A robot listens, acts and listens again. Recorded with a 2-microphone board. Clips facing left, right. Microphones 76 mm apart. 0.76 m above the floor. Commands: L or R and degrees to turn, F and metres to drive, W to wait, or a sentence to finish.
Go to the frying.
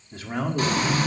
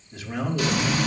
L45
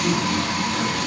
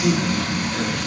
L90
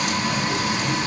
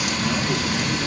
L25
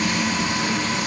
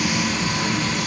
F1.0
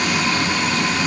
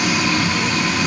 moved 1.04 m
F1.0
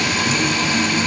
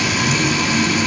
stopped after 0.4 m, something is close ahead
R10
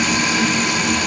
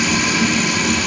I am next to the frying.